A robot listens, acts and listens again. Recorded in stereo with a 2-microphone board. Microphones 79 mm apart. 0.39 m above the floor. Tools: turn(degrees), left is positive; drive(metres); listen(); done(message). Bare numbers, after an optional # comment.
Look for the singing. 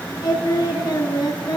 # The singing: about 60° left or 120° left.
turn(60)
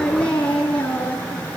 # So it is at 20° left.
turn(20)
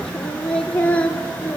# The singing is now 20° left.
turn(20)
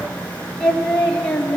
# The singing is now 15° left.
turn(15)
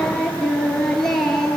done("Facing the singing.")